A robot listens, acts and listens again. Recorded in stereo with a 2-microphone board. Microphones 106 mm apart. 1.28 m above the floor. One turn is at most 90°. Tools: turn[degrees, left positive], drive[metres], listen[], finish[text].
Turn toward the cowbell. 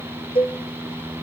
Thought: The cowbell: about 50° left or 130° left.
Action: turn[50]
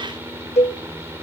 Thought: So it is at 80° left.
Action: turn[80]
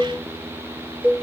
Thought: The cowbell is now 15° right.
Action: turn[-15]
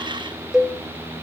Action: finish[Found it: a cowbell, straight ahead.]